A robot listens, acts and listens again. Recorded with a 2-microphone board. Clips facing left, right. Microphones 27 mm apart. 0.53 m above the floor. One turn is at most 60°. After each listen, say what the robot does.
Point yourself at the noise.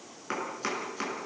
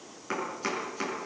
Turn 30° left.
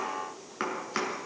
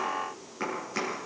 Turn 60° left.
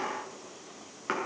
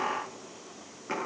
Turn 60° left.
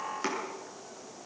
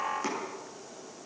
Turn 20° left.
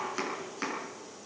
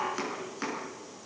Found it: chopping, straight ahead, over 4 m away.